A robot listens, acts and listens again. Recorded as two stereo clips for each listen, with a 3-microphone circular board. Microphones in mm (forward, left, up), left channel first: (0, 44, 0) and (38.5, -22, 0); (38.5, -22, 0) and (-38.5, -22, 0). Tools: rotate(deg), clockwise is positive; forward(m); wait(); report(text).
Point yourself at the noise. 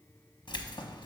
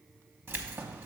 rotate(-120)
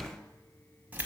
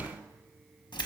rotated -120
report("Facing the keys jangling, under 1 m away.")